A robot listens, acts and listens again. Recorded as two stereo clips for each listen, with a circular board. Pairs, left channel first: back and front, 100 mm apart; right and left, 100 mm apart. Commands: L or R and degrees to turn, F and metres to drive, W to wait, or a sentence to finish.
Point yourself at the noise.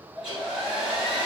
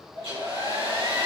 L80
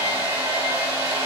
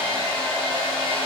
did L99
R15
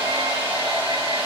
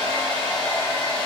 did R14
Found it: a hair dryer, straight ahead, 1 to 2 m away.